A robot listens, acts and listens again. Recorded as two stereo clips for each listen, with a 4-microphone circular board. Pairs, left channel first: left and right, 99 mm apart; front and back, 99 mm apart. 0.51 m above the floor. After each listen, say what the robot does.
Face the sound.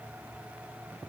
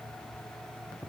Keep listening.
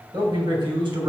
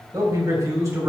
Turn 120° right.
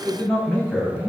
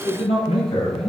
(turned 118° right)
Turn 15° left.
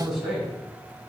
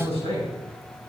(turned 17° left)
Facing the man speaking.